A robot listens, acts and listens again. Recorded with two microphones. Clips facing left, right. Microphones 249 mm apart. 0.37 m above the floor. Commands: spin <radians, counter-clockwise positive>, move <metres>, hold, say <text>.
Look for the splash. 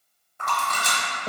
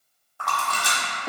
spin 0.35
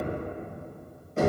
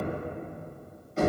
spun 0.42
hold
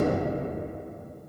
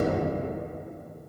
say I heard a splash, but can't make it out now. It was about 5° right or 135° left.